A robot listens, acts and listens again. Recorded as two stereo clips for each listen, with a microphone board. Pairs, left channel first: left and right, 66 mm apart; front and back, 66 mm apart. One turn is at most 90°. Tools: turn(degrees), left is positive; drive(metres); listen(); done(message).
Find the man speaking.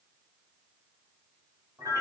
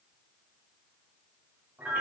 listen()
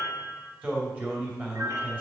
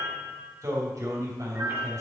turn(degrees=-90)
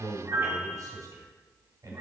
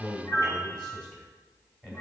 turn(degrees=-70)
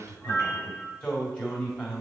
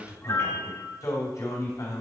turn(degrees=20)
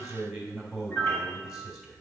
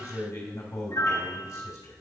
turn(degrees=-10)
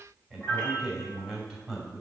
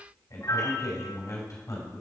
done("Found it: a man speaking, straight ahead.")